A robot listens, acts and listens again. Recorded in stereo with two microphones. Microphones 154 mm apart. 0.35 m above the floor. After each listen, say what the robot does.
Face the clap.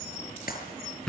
Turn 75° left.
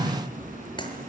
Keep listening.
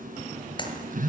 Turn 30° left.
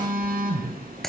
Facing the clap.